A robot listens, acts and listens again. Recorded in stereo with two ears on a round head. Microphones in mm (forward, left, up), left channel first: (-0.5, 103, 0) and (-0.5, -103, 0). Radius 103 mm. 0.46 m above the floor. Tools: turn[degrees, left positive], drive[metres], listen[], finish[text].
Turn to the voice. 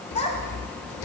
Thought: The child speaking: about 30° left or 150° left.
Action: turn[30]
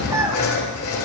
Thought: So it is at 15° right.
Action: turn[-15]
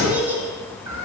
Thought: The child speaking is now 10° right.
Action: turn[-10]
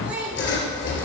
Action: finish[Facing the child speaking, 2 to 4 m away.]